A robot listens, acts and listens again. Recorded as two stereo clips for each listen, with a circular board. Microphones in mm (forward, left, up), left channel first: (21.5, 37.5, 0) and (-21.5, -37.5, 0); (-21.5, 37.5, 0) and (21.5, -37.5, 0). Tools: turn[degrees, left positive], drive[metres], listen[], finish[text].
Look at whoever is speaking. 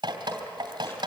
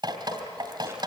Action: listen[]
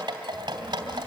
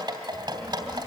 Thought: The child speaking: 70° left.
Action: turn[70]
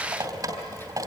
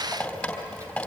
Action: finish[Found it: a child speaking, straight ahead, over 4 m away.]